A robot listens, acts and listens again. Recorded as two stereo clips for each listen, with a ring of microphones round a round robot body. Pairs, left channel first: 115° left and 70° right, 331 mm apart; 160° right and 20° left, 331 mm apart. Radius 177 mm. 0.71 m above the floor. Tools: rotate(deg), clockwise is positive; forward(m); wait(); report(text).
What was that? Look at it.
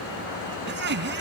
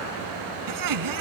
rotate(10)
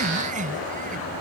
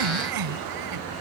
report("Facing the laughter.")